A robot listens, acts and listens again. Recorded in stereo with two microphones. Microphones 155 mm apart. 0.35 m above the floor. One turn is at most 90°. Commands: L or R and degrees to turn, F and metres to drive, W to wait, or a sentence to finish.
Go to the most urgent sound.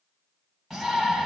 L30
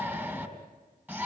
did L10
R10
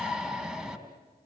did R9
F1.0
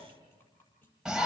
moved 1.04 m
F1.0
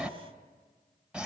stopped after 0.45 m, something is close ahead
R10
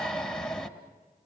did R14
Arrived at the shout, straight ahead.